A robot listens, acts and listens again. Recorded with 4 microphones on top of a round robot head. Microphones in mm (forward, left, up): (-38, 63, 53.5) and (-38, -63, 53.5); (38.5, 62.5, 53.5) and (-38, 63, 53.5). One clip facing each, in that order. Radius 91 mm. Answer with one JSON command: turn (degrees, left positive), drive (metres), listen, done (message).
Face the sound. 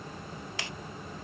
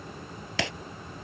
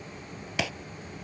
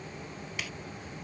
{"turn": -50}
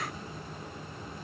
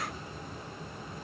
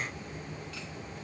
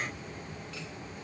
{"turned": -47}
{"done": "I heard breaking glass from this way, but can't make it out now."}